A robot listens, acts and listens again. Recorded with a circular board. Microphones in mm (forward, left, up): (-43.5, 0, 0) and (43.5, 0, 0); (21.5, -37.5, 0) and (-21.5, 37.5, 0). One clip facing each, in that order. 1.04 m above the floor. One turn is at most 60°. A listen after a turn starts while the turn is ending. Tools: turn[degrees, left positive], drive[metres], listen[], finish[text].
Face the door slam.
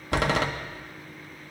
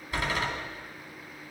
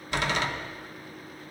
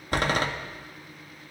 Thought: The door slam: 170° left.
Action: turn[60]
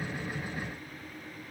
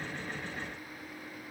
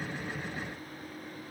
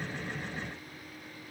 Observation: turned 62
Thought: Nothing new. It was at 105° left.
Action: turn[60]
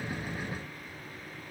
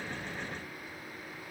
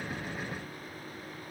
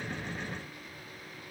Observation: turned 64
Thought: Nothing new. It was at 45° left.
Action: turn[45]
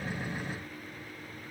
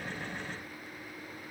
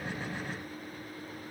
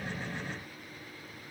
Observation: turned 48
Action: finish[Facing where the door slam came from. I can't hear it now.]